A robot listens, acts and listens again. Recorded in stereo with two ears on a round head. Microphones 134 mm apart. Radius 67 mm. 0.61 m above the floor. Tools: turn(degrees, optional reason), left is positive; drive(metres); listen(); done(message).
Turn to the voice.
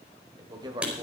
turn(degrees=-30, reason="The man speaking: about 30° right or 150° right.")
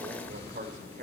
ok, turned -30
turn(degrees=-120, reason="So it is at 120° right.")
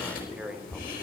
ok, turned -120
listen()
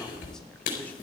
listen()
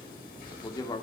turn(degrees=30, reason="The man speaking is now 30° left.")
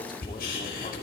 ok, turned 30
listen()
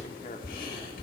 listen()
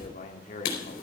turn(degrees=50, reason="The man speaking is now 50° left.")
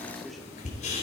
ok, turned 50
listen()
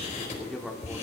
done("Found it: a man speaking, straight ahead.")